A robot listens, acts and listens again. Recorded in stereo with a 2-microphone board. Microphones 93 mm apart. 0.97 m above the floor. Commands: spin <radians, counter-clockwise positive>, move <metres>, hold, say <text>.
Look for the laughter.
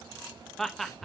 spin 0.52
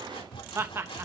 spin -0.52
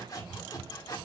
hold
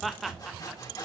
say Facing the laughter, under 1 m away.